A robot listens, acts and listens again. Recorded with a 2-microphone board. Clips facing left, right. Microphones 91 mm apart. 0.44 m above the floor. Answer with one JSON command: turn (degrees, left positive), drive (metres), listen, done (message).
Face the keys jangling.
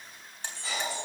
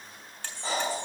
{"turn": 70}
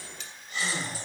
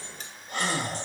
{"listen": true}
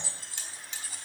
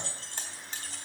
{"turn": 10}
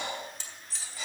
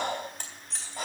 {"done": "Found it: keys jangling, straight ahead."}